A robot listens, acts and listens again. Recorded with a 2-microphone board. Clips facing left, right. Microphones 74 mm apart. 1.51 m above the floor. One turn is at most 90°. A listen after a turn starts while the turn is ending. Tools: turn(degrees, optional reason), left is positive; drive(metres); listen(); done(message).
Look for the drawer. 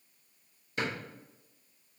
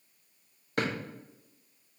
turn(degrees=-60, reason="The drawer: about 60° right or 120° right.")
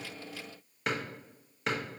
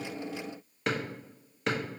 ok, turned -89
done("Facing the drawer.")